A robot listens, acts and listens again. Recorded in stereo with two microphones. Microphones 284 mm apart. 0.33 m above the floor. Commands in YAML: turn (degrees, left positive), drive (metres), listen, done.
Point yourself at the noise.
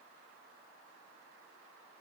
listen: true
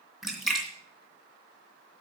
turn: 30
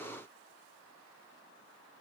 listen: true
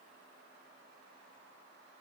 done: "I heard a splash, but can't make it out now. It was about 30° right or 150° left."